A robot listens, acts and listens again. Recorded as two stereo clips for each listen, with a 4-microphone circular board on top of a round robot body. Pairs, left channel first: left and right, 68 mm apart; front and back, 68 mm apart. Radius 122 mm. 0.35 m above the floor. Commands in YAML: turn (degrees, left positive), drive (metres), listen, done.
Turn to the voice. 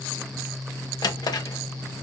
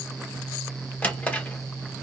listen: true
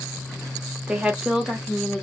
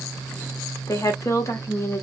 done: "Found it: a woman speaking, straight ahead, 1 to 2 m away."